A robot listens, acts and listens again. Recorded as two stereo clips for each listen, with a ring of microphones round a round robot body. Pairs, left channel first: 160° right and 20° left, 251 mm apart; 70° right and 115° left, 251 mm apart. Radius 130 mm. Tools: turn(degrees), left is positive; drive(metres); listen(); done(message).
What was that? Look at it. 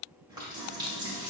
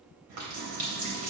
turn(degrees=95)
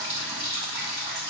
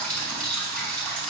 turn(degrees=20)
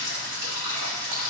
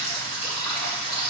done("Found it: a running tap, straight ahead.")